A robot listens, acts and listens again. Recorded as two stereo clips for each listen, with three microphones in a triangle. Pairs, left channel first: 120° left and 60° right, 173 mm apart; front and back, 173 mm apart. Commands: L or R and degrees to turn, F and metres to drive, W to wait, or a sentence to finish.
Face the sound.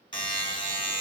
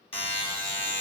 L60
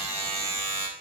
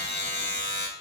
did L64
Found it: a buzzer, straight ahead.